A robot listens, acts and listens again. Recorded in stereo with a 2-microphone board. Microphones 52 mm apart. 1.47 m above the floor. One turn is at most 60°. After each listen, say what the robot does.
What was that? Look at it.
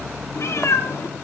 Turn 60° left.
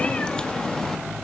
Turn 15° left.
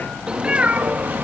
Turn 35° right.
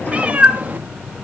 Turn 35° right.
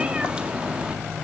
Turn 20° right.
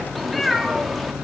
Facing the cat meowing, 1 to 2 m away.